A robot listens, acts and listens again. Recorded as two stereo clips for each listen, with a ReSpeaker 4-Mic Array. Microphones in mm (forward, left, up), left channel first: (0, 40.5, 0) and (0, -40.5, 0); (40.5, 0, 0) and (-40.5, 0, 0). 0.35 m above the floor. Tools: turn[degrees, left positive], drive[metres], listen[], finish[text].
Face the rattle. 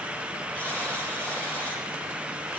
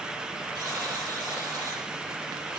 Action: listen[]
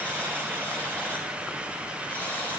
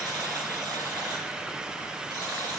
Action: listen[]
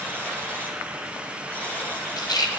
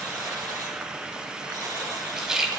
Thought: The rattle: 95° left.
Action: turn[95]
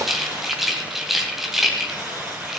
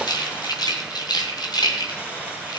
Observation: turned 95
Action: finish[Facing the rattle.]